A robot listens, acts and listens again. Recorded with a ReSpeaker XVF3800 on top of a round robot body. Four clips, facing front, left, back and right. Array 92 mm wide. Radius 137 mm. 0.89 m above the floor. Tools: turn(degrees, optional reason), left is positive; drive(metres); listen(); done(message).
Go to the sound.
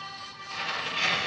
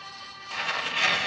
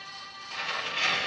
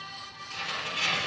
turn(degrees=90, reason="The tearing paper: 90° left.")
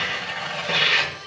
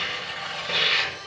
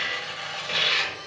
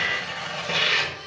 turn(degrees=-20, reason="The tearing paper is now 20° right.")
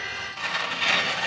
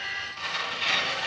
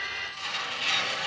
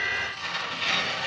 drive(metres=1.0)
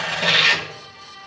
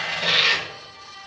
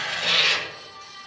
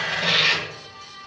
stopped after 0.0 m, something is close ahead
done("Something is in my way. I am facing the tearing paper but have not reached it.")